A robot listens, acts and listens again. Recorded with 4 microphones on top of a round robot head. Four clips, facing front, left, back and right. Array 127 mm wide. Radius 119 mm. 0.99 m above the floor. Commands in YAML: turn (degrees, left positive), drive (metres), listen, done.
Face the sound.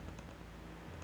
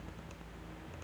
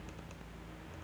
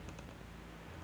listen: true
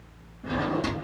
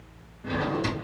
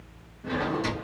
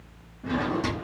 turn: -55
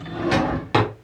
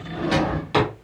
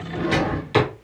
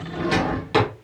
done: "Found it: a drawer, straight ahead, 2 to 4 m away."